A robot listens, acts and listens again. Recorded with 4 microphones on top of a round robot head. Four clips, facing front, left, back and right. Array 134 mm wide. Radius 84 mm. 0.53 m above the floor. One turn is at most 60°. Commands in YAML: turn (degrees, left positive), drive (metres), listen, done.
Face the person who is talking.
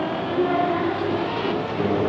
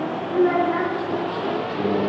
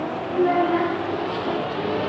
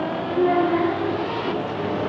turn: 60
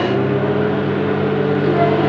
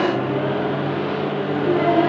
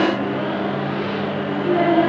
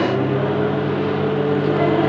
turn: 25
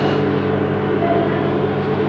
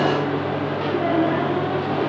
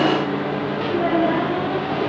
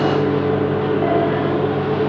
listen: true
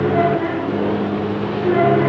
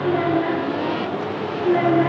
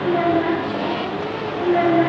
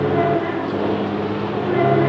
turn: 10
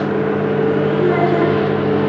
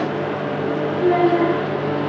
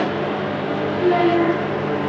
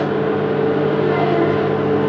listen: true
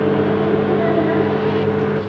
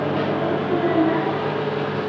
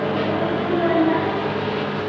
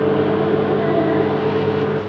listen: true
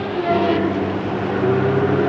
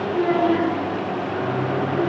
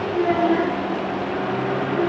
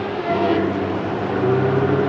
done: "Found it: a child speaking, straight ahead, over 4 m away."